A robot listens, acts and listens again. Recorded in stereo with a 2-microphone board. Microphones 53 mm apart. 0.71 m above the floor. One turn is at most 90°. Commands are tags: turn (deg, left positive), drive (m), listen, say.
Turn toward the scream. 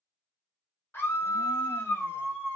<turn deg="45"/>
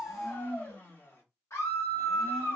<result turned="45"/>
<turn deg="80"/>
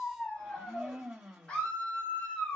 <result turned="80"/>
<turn deg="20"/>
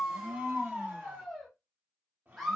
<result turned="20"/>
<say>Facing the scream.</say>